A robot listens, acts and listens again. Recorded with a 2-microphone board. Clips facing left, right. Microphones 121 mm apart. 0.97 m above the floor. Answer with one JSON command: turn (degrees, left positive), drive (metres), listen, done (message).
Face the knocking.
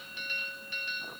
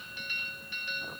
{"listen": true}
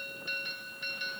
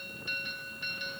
{"listen": true}
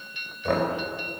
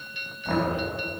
{"turn": 75}
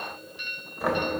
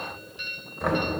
{"done": "Facing the knocking, 2 to 4 m away."}